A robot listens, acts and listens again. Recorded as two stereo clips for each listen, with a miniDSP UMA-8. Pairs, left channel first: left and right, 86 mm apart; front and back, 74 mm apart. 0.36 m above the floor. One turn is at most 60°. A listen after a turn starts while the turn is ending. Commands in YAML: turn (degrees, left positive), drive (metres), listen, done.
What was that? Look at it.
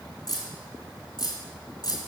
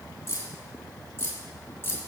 turn: 55
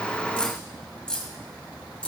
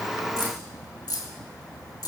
turn: 15
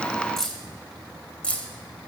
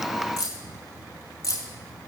turn: 20
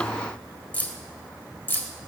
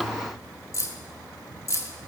turn: 30
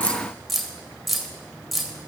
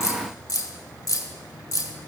done: "Facing the keys jangling, 1 to 2 m away."